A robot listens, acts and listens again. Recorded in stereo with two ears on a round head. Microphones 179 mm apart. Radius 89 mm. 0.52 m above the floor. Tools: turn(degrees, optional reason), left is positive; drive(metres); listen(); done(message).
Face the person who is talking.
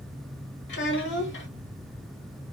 turn(degrees=65, reason="The child speaking: about 65° left or 115° left.")
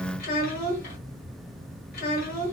turn(degrees=50, reason="So it is at 50° left.")
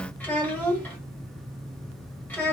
turn(degrees=10, reason="The child speaking is now 10° left.")
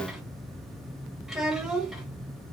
done("Facing the child speaking, 1 to 2 m away.")